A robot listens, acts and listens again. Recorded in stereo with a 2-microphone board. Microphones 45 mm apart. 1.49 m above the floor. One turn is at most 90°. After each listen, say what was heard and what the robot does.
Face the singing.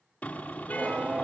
The singing: about 30° right or 150° right. Turn 30° right.
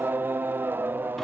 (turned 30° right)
So it is at 120° right. Turn 90° right.
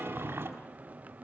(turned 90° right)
The singing is now 40° right. Turn 40° right.
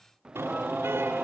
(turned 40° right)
The singing is now 20° right. Turn 20° right.
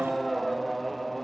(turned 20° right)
Found it: singing, straight ahead, under 1 m away.